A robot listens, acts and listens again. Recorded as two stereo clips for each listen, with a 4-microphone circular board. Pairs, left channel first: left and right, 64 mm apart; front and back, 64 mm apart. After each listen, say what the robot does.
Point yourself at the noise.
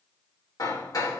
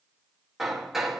Turn 95° left.
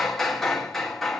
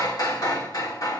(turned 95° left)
Facing the hammering.